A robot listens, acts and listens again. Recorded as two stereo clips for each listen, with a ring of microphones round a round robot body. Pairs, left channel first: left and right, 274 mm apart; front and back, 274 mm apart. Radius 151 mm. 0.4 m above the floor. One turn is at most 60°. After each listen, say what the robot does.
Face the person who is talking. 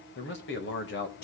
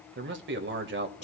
Turn 60° left.
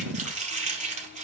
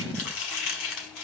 Turn 60° left.
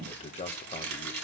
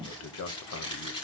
Turn 25° left.
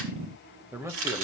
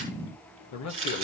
Turn 10° right.
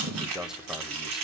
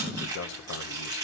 Facing the man speaking.